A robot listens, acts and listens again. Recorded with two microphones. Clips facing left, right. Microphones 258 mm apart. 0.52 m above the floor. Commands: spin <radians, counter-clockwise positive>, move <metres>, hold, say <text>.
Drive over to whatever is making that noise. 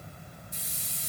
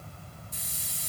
spin -0.70
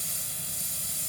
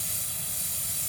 spin -1.75
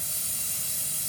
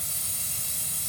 spin -1.05
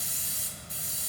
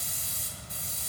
move 1.0
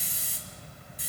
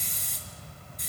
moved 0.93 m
spin 0.17
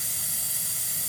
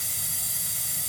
move 1.0
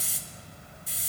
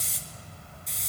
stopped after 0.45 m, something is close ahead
say I am next to the hiss.